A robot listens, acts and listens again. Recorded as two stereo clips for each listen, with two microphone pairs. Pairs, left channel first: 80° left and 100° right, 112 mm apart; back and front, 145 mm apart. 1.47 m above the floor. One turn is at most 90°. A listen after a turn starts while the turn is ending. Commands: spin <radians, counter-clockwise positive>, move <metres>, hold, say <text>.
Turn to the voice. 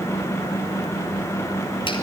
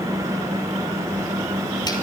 hold
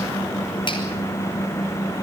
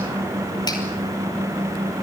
hold
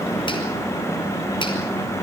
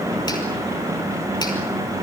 say I can't make out anyone speaking to turn to.